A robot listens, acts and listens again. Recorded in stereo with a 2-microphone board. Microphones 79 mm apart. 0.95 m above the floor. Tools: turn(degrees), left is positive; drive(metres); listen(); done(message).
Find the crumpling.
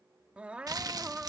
turn(degrees=-55)
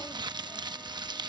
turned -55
turn(degrees=-70)
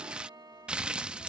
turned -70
turn(degrees=-15)
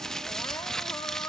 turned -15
done("Found it: crumpling, straight ahead.")